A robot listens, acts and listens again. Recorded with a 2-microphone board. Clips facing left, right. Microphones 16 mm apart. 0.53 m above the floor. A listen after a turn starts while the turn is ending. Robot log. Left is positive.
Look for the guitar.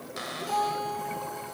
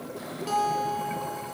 note: The guitar: about 25° right or 155° right.
cmd yaw -25
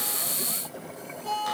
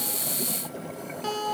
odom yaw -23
note: So it is at 135° right.
cmd yaw -135
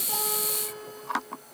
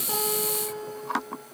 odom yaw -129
end: Facing the guitar.